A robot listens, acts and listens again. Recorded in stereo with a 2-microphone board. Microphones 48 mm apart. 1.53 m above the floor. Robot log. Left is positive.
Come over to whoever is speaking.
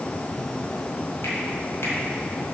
cmd idle
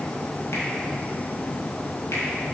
cmd idle
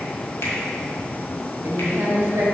cmd yaw -90
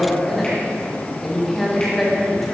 cmd fwd 1.0
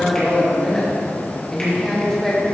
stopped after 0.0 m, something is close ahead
note: The woman speaking is now 10° left.
cmd yaw +10
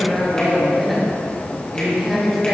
end: Blocked. The woman speaking is further on, straight ahead.